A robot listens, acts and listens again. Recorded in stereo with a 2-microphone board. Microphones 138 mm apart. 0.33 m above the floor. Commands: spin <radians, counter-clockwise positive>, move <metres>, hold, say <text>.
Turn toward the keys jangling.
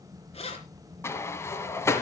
spin 0.87
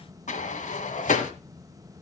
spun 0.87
hold
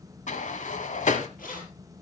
spin 1.40
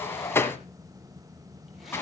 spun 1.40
hold
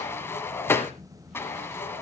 hold
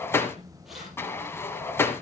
say I heard keys jangling from this way, but can't make it out now.